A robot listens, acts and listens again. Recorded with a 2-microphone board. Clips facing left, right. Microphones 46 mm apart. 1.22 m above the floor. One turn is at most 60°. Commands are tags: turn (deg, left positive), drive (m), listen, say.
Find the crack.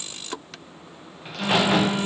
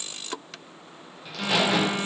<turn deg="40"/>
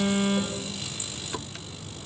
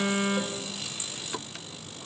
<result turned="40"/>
<listen/>
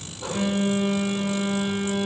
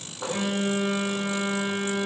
<say>I heard a crack, but can't make it out now. It was about straight ahead or 100° left.</say>